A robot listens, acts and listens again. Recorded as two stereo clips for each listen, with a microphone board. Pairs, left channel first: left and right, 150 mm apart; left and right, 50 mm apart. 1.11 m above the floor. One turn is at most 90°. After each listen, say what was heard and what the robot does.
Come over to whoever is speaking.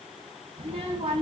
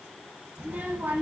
The child speaking: about 40° right or 140° right. Turn 40° right.
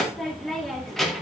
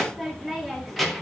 Drive 1.0 m forward.
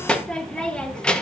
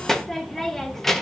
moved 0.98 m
Drive 1.0 m forward.
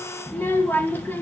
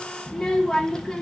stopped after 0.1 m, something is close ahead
The child speaking is now 15° left. Turn 15° left.
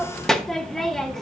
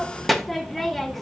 Arrived at the child speaking, straight ahead.